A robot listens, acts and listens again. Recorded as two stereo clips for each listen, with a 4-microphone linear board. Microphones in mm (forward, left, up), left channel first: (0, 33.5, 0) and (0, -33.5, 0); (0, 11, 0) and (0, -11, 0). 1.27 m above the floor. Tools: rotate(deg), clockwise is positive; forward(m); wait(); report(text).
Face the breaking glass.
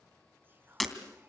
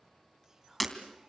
rotate(-30)
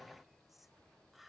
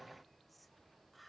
wait()
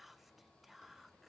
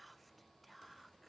report("I heard breaking glass, but can't make it out now. It was about 30° right or 150° left.")